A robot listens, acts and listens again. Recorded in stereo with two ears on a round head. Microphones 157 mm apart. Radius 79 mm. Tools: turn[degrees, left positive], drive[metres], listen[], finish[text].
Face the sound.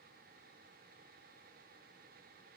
Action: listen[]
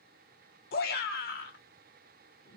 Thought: The shout: about 55° left or 125° left.
Action: turn[55]
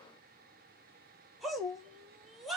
Action: finish[Found it: a shout, straight ahead.]